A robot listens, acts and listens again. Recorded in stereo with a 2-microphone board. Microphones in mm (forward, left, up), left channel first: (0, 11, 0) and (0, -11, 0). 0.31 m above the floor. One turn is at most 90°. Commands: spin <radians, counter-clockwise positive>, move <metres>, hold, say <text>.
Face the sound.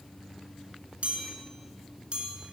spin -0.96
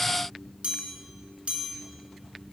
spin -1.13
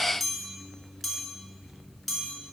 say Found it: a chime, straight ahead, 2 to 4 m away.